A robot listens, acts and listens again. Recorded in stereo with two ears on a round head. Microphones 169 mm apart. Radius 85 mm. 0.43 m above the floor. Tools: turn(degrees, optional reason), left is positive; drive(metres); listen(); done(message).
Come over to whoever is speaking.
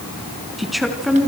turn(degrees=30)
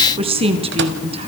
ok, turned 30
turn(degrees=-30, reason="So it is at 30° right.")
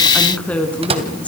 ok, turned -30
drive(metres=1.0)
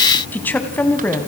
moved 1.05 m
turn(degrees=10, reason="The woman speaking is now 10° left.")
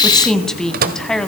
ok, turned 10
drive(metres=1.0)
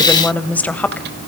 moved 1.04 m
turn(degrees=10, reason="The woman speaking is now 10° left.")
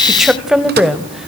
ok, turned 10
drive(metres=1.0)
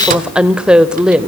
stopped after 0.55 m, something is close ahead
done("I am next to the woman speaking.")